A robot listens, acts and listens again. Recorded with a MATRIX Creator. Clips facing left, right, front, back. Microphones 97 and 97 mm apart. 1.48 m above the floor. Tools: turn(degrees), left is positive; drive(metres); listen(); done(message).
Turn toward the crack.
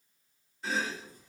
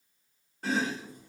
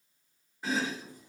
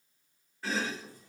listen()
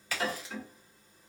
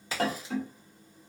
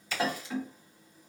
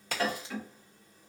turn(degrees=-150)
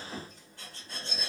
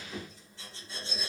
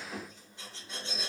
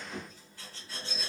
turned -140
turn(degrees=-10)
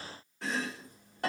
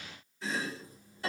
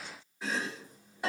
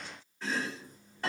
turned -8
done("I heard a crack from this way, but can't make it out now.")